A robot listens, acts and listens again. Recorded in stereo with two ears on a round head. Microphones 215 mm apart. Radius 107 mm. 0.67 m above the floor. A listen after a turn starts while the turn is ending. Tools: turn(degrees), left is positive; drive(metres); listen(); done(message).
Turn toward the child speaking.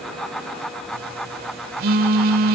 listen()
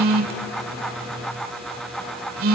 listen()
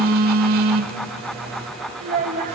turn(degrees=-35)
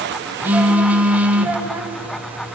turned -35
listen()
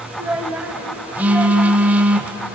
done("Facing the child speaking.")